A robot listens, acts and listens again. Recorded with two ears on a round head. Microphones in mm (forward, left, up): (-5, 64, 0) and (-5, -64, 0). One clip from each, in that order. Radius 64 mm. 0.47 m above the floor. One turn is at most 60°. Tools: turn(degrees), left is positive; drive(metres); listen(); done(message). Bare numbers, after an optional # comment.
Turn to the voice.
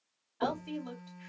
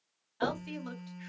# The woman speaking: about 50° right or 130° right.
turn(-50)
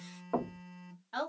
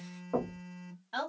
# So it is at 20° right.
turn(-20)
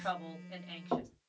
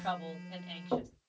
done("Facing the woman speaking.")